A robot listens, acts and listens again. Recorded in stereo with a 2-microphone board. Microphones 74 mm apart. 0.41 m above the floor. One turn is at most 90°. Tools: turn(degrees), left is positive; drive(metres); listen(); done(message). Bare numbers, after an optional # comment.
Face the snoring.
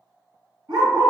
listen()
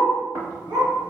# The snoring: about 30° right or 150° right.
turn(-30)
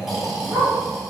done("Found it: snoring, straight ahead, 1 to 2 m away.")